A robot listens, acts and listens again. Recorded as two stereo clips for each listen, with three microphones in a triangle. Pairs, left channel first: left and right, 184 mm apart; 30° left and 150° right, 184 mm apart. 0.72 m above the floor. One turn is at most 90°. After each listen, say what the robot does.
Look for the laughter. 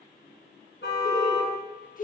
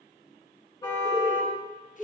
Turn 90° left.
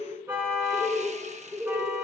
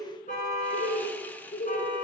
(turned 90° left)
Turn 10° right.
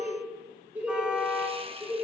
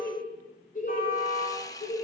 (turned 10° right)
Turn 15° right.
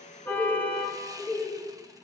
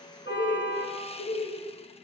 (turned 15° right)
Found it: laughter, straight ahead.